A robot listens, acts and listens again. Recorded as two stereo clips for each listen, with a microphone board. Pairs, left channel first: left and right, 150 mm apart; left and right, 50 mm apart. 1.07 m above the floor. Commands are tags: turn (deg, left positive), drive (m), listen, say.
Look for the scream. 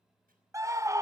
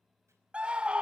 <turn deg="-20"/>
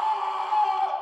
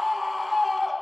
<say>Facing the scream.</say>